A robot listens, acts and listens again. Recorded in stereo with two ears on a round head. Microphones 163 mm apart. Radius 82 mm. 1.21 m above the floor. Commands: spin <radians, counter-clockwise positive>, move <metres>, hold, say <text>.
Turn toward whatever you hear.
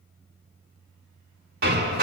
spin -0.96
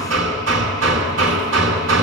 spin -1.13
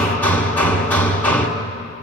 spin 0.17
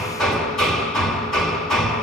say Facing the hammering, 1 to 2 m away.